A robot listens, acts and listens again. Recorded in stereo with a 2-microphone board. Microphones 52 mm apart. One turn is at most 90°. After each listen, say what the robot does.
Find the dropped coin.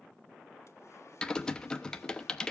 Keep listening.
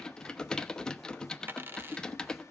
Turn 40° right.
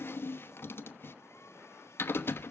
Keep listening.
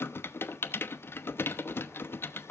I heard a dropped coin, but can't make it out now. It was about straight ahead or 100° right.